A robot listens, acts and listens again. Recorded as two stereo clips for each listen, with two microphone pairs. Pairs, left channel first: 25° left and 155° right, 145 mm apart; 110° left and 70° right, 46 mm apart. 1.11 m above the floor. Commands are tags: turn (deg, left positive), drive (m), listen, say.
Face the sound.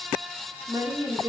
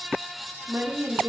<turn deg="-90"/>
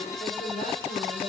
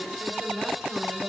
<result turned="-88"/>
<turn deg="10"/>
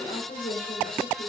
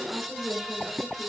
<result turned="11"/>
<say>Facing the woman speaking.</say>